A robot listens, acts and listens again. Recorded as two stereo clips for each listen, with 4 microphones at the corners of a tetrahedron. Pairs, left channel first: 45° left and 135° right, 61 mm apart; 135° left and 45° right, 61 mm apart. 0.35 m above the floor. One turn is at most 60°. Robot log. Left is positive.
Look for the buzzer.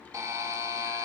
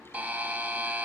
note: The buzzer: 110° right.
cmd yaw -60
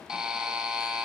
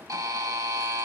note: The buzzer is now 55° right.
cmd yaw -55
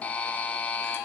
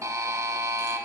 note: The buzzer is now 20° right.
cmd yaw -20
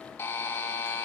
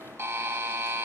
end: Facing the buzzer, under 1 m away.